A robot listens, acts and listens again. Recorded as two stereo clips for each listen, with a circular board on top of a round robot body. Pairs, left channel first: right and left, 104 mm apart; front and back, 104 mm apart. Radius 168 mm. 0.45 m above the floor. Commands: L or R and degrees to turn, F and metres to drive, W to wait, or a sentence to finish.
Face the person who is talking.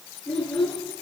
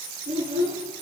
R175
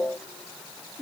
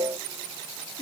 Found it: a child speaking, straight ahead.